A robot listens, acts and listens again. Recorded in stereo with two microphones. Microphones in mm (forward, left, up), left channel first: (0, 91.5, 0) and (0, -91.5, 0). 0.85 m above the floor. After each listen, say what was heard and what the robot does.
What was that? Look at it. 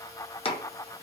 The chopping: about 30° left or 150° left. Turn 30° left.
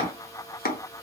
So it is at 115° left. Turn 115° left.
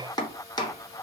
The chopping is now 25° left. Turn 25° left.
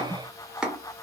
Facing the chopping, under 1 m away.